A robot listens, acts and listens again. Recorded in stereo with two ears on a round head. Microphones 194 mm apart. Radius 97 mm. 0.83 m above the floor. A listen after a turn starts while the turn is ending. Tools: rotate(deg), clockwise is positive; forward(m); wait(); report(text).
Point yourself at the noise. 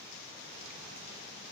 wait()
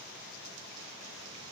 wait()
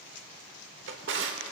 rotate(55)
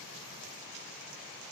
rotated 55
wait()
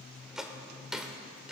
report("Facing the drawer.")